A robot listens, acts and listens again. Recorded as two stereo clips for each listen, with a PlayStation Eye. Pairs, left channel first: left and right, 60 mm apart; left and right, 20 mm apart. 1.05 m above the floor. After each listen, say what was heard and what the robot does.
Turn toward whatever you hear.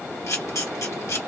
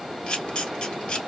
The camera shutter: about 55° left or 125° left. Turn 55° left.
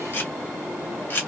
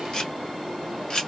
So it is at 45° left. Turn 45° left.
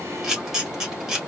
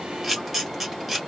The camera shutter is now 10° right. Turn 10° right.
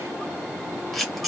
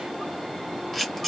Facing the camera shutter, 1 to 2 m away.